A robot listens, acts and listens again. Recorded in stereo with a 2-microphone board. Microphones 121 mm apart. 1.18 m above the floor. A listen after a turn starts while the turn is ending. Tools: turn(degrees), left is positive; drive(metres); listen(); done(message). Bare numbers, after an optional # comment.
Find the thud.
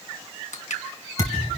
# The thud: about 25° left or 155° left.
turn(25)
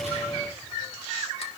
listen()
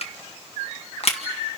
done("I heard a thud, but can't make it out now. It was about straight ahead or 130° left.")